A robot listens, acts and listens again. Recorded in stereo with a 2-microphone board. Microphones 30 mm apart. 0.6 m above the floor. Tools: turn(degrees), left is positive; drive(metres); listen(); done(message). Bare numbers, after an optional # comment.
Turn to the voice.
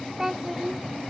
# The child speaking: about 15° right or 165° right.
turn(-15)
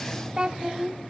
# So it is at 150° right.
turn(-150)
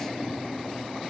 listen()
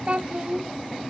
# The child speaking is now 45° right.
turn(-45)
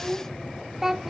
# The child speaking is now 15° right.
turn(-15)
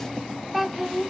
done("Found it: a child speaking, straight ahead.")